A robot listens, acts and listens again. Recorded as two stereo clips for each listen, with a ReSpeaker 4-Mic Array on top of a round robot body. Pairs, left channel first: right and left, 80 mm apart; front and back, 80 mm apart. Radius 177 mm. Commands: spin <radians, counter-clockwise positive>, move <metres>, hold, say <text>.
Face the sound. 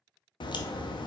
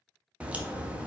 spin -1.83
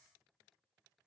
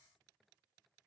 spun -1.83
say I heard a crack from this way, but can't make it out now.